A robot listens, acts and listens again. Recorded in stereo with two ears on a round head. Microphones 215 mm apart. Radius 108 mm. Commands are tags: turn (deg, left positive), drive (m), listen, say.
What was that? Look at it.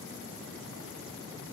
<listen/>
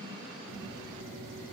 <listen/>
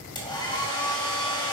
<turn deg="20"/>
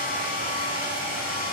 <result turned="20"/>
<turn deg="135"/>
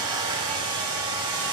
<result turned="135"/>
<turn deg="-25"/>
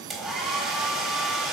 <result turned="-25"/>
<say>Found it: a hair dryer, straight ahead, 1 to 2 m away.</say>